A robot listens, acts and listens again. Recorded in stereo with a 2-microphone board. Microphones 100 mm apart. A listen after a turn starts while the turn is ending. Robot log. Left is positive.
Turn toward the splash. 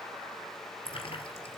note: The splash: about 60° left or 120° left.
cmd yaw +60
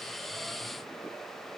cmd idle
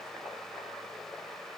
end: I heard a splash, but can't make it out now. It was about straight ahead or 60° left.